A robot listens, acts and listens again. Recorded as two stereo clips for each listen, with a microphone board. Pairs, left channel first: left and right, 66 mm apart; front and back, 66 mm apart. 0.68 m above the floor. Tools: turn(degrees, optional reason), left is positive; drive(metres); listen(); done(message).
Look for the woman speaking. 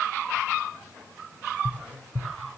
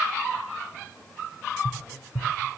listen()
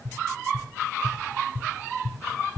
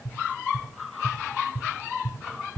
listen()
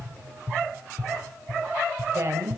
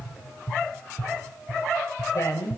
turn(degrees=-40, reason="The woman speaking: 40° right.")
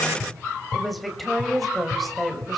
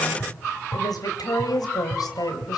done("Facing the woman speaking.")